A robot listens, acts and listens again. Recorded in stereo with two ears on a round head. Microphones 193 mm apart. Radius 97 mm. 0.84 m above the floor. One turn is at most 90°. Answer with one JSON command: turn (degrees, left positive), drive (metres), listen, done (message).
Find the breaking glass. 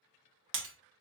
{"turn": -60}
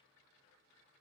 {"listen": true}
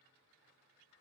{"done": "I heard breaking glass, but can't make it out now. It was about straight ahead or 60° right."}